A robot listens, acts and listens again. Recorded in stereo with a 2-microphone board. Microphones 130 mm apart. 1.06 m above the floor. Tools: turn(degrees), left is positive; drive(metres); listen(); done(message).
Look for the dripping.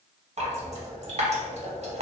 turn(degrees=-55)
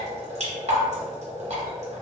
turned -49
turn(degrees=-65)
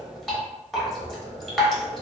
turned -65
done("Found it: dripping, straight ahead.")